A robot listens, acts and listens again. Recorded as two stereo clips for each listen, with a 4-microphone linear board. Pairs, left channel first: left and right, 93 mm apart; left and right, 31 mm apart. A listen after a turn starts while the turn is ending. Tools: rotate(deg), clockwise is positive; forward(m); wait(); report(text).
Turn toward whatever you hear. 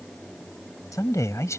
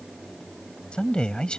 rotate(-30)
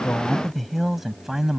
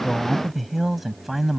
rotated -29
report("Facing the man speaking.")